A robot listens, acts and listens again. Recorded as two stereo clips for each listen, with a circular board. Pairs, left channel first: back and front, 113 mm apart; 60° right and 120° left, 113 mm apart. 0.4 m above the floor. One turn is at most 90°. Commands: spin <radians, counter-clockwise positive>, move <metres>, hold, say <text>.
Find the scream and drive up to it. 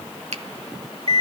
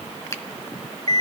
hold
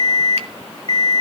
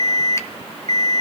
hold
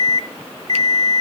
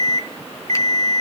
say I can't make out a scream to turn to.